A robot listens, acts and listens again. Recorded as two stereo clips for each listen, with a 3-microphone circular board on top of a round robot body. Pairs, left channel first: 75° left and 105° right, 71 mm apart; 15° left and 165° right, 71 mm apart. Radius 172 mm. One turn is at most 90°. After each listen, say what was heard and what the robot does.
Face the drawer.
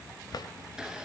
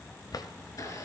The drawer: 45° left. Turn 45° left.
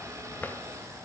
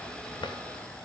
The drawer is now 10° left. Turn 10° left.
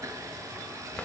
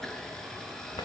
Keep listening.
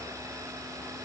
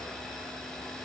Keep listening.
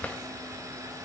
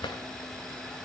Found it: a drawer, straight ahead, under 1 m away.